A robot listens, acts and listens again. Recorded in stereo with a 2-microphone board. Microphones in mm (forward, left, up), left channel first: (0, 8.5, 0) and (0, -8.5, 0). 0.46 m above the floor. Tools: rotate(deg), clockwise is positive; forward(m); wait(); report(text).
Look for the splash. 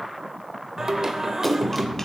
rotate(30)
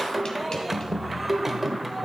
wait()
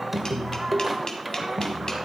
report("I heard a splash, but can't make it out now. It was about 25° left or 145° right.")